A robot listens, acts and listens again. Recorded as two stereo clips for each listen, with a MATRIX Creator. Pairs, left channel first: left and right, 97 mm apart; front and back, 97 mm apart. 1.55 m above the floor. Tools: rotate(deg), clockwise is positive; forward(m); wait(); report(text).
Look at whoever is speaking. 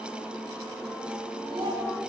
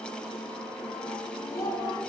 rotate(55)
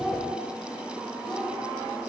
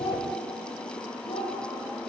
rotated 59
report("Facing the child speaking, over 4 m away.")